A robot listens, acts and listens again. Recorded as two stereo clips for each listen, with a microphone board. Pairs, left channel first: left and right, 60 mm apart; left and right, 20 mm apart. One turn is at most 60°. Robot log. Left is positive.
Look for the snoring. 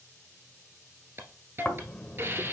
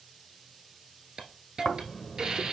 note: The snoring: about 20° left or 160° left.
cmd yaw +20
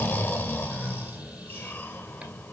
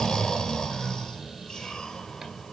note: So it is at 135° left.
cmd yaw +60
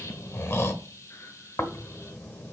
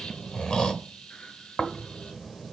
note: The snoring is now 55° left.
cmd yaw +55
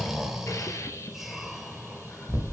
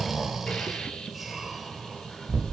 end: Facing the snoring.